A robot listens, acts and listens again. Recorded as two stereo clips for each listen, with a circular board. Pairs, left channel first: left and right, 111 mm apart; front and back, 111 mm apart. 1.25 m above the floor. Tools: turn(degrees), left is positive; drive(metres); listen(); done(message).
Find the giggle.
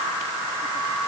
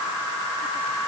listen()
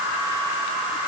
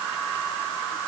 listen()
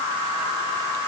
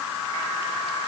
done("I can't make out a giggle to turn to.")